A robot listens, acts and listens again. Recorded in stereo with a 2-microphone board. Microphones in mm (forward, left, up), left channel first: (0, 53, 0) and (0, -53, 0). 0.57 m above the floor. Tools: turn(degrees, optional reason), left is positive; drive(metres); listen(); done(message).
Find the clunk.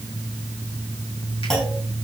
turn(degrees=30)
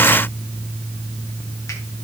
listen()
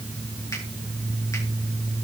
done("I heard a clunk, but can't make it out now. It was about 25° right or 145° left.")